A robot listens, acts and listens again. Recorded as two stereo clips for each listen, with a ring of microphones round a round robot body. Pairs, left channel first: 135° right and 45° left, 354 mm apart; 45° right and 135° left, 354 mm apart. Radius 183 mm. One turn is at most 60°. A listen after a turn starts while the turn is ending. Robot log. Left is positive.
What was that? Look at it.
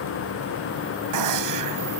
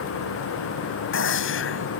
note: The gunshot: 10° left.
cmd yaw +10
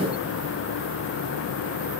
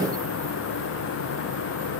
end: I heard a gunshot from this way, but can't make it out now.